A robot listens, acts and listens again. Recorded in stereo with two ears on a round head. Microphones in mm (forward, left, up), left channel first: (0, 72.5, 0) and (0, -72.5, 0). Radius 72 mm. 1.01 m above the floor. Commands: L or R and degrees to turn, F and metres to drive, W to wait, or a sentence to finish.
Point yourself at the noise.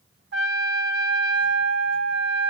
R90
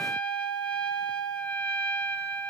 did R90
Facing the trumpet.